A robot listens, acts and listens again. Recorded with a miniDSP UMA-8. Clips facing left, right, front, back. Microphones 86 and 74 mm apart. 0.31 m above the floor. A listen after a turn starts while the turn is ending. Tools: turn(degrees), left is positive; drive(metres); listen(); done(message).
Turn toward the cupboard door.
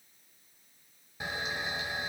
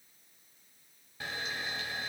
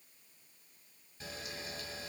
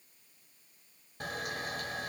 listen()
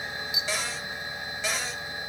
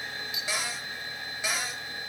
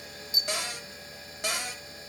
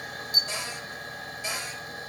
turn(degrees=-10)
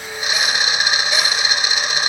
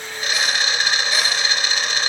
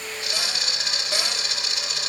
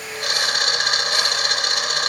listen()
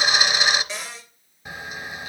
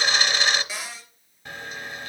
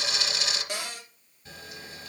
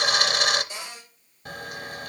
done("Facing the cupboard door.")